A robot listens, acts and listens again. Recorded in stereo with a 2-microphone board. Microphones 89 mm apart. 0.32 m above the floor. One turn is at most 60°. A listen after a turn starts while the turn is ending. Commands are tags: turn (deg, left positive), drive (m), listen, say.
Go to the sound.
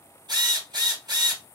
<turn deg="-55"/>
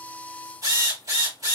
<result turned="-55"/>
<turn deg="-55"/>
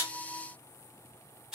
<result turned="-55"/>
<turn deg="-10"/>
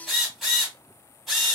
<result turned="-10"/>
<drive m="1.0"/>
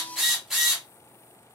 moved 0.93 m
<drive m="1.0"/>
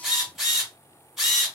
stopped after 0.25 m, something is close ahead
<say>Arrived at the drill, straight ahead.</say>